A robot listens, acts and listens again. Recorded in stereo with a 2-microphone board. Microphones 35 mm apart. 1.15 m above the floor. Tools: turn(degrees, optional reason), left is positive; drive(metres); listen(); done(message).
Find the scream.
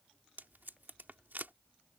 listen()
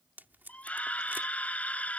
turn(degrees=45, reason="The scream: about 45° left or 135° left.")
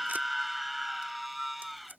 done("Facing the scream.")